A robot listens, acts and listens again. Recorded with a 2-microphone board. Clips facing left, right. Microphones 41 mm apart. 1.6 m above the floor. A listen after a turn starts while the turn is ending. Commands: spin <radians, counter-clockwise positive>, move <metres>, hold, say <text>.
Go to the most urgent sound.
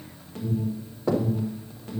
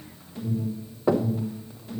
spin 1.05
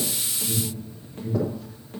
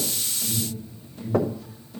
spin 0.96
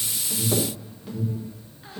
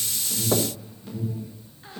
move 1.0
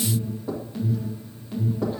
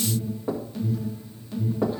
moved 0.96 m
spin 0.17
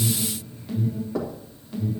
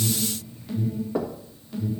move 1.0
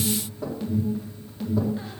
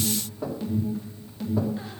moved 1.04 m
move 1.0
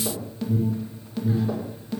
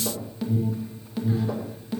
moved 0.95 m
spin -0.17
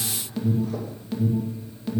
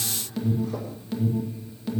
move 1.0
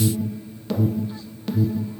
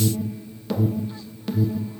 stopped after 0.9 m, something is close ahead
say I am next to the alarm.